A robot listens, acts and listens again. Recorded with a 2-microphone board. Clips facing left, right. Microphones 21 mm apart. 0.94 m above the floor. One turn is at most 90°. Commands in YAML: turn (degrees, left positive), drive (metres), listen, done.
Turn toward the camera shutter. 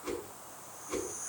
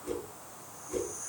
listen: true
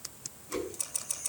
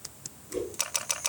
turn: -60
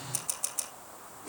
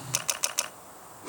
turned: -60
turn: -55
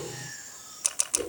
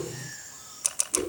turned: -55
turn: 10
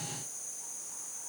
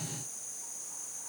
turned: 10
listen: true
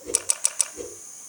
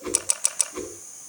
done: "Found it: a camera shutter, straight ahead."